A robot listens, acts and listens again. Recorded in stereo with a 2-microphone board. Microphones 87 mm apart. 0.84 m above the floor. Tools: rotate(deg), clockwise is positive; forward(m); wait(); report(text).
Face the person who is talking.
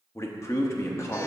rotate(-30)
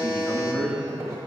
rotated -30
rotate(-10)
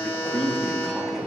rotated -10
report("Found it: a man speaking, straight ahead, under 1 m away.")